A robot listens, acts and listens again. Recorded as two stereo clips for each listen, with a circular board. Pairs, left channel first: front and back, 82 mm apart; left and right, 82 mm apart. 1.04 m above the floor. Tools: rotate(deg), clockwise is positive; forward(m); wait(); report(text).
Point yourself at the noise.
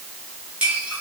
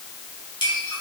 rotate(-105)
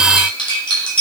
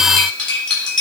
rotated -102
report("Found it: cutlery clinking, straight ahead.")